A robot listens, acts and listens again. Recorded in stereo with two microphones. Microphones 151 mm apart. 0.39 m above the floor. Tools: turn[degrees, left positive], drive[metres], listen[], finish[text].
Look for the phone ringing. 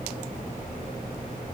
Action: listen[]
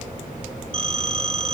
Thought: The phone ringing: about 40° right or 140° right.
Action: turn[-40]
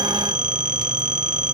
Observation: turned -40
Thought: So it is at 95° right.
Action: turn[-95]
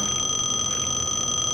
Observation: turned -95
Action: finish[Found it: a phone ringing, straight ahead, under 1 m away.]